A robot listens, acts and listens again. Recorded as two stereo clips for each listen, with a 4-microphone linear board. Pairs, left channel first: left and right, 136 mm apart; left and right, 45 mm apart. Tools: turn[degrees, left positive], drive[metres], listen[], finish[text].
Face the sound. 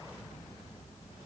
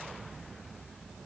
Action: listen[]
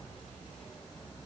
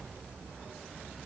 Action: listen[]
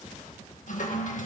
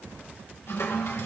Thought: The toilet flushing: about 65° left or 115° left.
Action: turn[65]
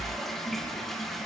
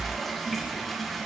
Action: finish[Found it: a toilet flushing, straight ahead.]